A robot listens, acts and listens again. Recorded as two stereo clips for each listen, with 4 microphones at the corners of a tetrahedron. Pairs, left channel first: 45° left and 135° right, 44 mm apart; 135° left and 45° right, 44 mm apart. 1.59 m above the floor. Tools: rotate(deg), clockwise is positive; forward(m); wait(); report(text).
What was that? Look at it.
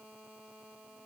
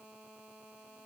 wait()
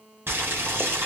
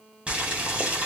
rotate(105)
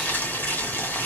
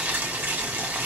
report("Found it: boiling, straight ahead.")